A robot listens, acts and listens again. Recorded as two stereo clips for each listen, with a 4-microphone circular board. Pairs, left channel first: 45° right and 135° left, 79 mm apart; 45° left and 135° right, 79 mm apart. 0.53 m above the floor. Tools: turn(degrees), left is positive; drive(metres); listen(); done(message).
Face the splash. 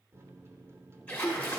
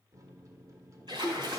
turn(degrees=-115)
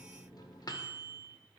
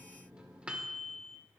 done("I heard a splash from this way, but can't make it out now.")